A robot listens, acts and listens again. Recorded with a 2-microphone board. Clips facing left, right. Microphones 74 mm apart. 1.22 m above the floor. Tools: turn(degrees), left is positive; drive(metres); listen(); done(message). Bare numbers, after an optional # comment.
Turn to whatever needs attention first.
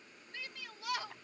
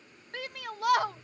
# The shout: about 60° right or 120° right.
turn(-60)
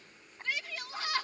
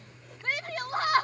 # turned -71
# So it is at 50° right.
turn(-50)
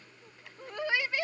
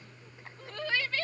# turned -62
# The shout is now 15° left.
turn(15)
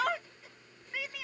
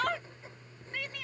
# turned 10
done("Facing the shout.")